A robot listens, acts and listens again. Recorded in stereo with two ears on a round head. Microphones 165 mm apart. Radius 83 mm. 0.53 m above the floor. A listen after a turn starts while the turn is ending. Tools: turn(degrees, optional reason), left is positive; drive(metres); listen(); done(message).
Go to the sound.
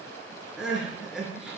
turn(degrees=-30)
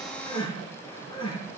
turn(degrees=25, reason="So it is at 25° left.")
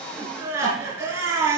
turn(degrees=-15, reason="The crying is now 15° right.")
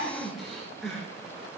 drive(metres=1.0)
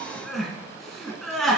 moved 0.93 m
drive(metres=1.0)
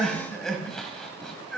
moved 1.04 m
drive(metres=1.0)
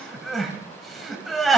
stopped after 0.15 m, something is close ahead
done("I am next to the crying.")